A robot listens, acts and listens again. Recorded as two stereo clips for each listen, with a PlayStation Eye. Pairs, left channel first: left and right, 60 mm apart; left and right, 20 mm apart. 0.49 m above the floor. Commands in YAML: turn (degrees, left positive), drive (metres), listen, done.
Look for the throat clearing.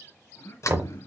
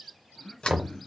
turn: 60
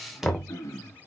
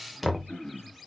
turn: 60
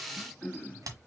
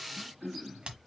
done: "Found it: throat clearing, straight ahead."